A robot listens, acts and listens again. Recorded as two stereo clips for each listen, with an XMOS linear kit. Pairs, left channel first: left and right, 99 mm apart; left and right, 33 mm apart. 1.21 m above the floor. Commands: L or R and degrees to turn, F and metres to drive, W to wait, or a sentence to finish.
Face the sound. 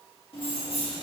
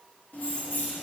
L70
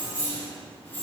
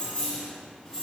L15
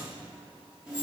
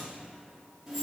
R10
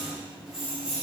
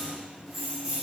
R10
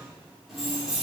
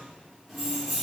Found it: keys jangling, straight ahead, 2 to 4 m away.